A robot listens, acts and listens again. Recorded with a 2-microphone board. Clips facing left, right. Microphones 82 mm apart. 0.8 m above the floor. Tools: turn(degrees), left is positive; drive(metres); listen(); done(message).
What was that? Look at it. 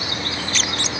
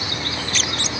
listen()
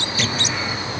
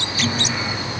listen()
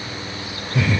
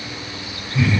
turn(degrees=90)
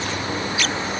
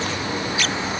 listen()
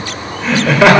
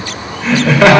done("Facing the laughter.")